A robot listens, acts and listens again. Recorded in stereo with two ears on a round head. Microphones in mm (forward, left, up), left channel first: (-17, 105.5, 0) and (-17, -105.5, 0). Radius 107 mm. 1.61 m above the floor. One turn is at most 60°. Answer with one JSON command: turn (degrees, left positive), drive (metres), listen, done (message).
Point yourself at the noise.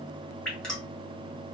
{"turn": 30}
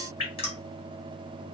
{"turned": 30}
{"turn": 60}
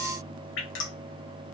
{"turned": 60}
{"turn": 60}
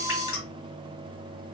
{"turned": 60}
{"turn": 25}
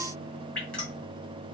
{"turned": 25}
{"done": "Facing the dripping."}